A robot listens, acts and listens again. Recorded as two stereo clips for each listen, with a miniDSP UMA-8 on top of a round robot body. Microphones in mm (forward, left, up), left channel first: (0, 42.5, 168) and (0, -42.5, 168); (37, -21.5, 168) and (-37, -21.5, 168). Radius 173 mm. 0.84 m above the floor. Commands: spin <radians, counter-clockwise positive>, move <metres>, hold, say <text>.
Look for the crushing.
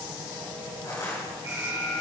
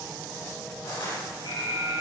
spin 0.61
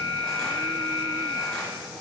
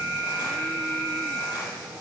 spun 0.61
hold
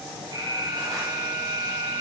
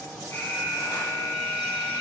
hold
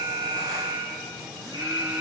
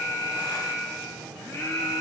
say Facing where the crushing came from. I can't hear it now.